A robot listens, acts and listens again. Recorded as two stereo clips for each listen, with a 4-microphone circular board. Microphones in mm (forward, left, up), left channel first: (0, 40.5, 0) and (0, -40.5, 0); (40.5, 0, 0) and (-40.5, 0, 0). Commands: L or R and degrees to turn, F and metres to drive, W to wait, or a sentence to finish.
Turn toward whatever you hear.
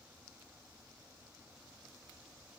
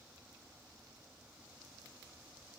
W
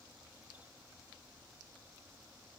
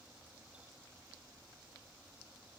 W
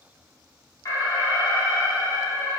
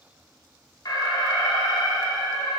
L40
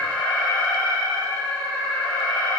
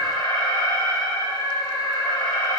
L20
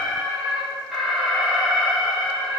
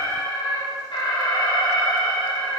Found it: an alarm, straight ahead.